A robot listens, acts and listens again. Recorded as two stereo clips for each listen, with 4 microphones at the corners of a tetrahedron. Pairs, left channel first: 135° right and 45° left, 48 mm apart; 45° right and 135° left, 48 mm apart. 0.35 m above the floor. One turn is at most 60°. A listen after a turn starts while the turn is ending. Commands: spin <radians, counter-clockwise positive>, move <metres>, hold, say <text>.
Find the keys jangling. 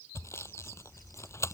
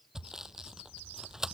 hold
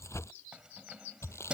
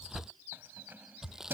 spin 1.05
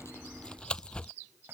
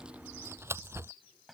spin 0.79
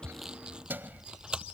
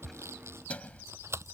spin 0.17
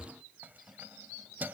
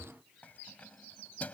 say Found it: keys jangling, straight ahead.